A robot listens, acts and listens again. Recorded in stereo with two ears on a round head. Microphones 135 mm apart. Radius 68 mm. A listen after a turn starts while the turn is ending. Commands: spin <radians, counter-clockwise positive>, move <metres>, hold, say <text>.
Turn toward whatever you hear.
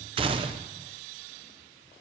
spin -0.61
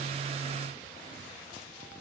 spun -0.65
hold
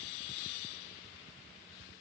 say I heard a gunshot, but can't make it out now. It was about 5° left or 110° right.